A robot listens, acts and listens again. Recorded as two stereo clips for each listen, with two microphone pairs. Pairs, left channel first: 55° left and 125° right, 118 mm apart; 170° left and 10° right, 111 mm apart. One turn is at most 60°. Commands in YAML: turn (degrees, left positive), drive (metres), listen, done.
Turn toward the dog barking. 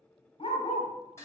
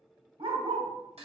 turn: 20
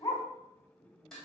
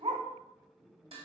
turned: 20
done: "Facing the dog barking."